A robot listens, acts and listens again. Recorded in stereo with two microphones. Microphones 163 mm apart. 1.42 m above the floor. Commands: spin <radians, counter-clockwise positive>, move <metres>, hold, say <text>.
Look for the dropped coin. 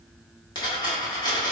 spin 0.44
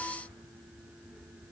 hold
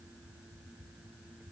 say I heard a dropped coin, but can't make it out now. It was about straight ahead or 130° left.